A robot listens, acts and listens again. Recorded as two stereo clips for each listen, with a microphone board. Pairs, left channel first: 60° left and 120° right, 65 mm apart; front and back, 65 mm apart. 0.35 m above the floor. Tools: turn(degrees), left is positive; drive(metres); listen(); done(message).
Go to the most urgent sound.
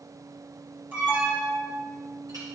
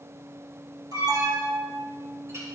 turn(degrees=180)
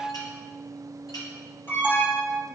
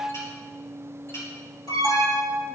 drive(metres=1.0)
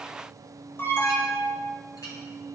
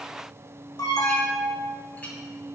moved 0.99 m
turn(degrees=10)
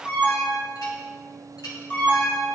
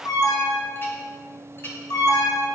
drive(metres=1.0)
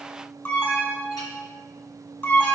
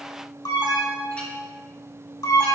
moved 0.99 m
drive(metres=1.0)
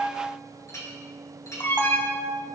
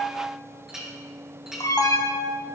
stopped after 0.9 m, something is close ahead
turn(degrees=10)
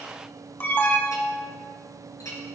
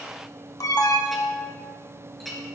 done("I am next to the alarm.")